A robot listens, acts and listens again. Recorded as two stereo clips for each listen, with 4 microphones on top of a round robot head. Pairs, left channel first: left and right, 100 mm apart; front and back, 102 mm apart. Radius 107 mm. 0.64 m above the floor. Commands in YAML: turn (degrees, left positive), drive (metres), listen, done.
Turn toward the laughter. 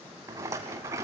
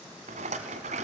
listen: true
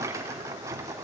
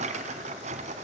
listen: true
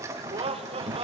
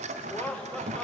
turn: -80
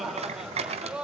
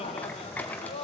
turn: -10
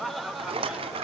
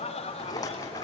done: "Found it: laughter, straight ahead."